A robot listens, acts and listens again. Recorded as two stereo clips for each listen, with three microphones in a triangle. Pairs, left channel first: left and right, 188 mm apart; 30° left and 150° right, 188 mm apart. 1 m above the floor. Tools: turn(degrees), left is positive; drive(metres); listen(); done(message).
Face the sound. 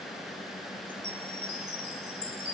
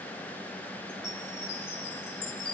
turn(degrees=-105)
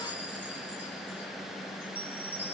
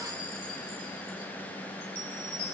turn(degrees=-10)
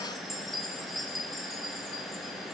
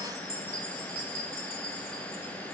done("Facing the chime.")